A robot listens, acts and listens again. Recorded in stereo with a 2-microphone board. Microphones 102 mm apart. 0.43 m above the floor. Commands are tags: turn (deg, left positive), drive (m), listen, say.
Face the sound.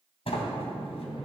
<turn deg="70"/>
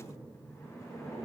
<turn deg="30"/>
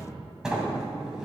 <turn deg="-10"/>
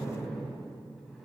<say>Facing the sliding door.</say>